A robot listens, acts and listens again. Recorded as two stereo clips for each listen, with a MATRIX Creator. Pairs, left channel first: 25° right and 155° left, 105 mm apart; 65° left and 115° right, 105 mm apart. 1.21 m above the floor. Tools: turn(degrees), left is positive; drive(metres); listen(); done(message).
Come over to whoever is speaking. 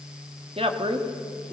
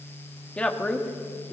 turn(degrees=145)
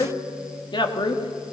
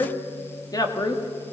turn(degrees=20)
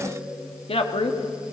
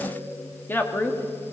drive(metres=1.0)
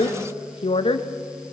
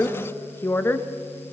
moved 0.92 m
drive(metres=1.0)
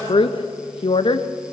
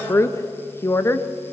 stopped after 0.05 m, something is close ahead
done("I am next to the woman speaking.")